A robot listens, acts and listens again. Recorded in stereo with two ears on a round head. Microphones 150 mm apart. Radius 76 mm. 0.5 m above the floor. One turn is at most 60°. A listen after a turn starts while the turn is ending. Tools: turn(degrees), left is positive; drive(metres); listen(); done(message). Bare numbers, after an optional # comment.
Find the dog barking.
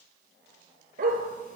# The dog barking: about 55° right or 125° right.
turn(-55)
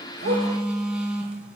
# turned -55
listen()
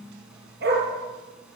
# So it is at 60° right.
turn(-60)
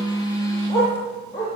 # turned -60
# The dog barking is now 20° left.
turn(20)
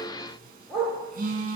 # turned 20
done("Facing the dog barking, over 4 m away.")